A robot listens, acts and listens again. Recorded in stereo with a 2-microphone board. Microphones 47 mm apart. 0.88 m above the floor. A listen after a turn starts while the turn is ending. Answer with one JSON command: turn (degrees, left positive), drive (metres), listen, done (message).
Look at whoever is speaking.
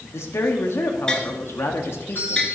{"turn": 60}
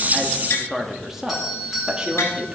{"turn": -20}
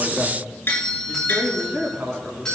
{"turn": -20}
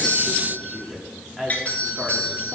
{"done": "Facing the woman speaking."}